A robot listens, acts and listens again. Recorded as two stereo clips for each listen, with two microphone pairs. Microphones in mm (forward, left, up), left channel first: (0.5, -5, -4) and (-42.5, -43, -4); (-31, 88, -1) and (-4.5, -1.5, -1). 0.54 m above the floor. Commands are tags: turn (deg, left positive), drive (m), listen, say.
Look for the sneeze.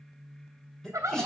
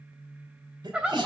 <turn deg="-40"/>
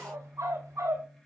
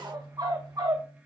<say>I heard a sneeze from this way, but can't make it out now.</say>